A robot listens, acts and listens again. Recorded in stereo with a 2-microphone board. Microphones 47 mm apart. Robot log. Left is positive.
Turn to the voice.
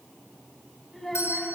cmd yaw +30
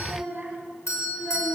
note: So it is at 25° right.
cmd yaw -25
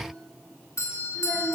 note: The child speaking is now 10° right.
cmd yaw -10
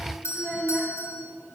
end: Facing the child speaking.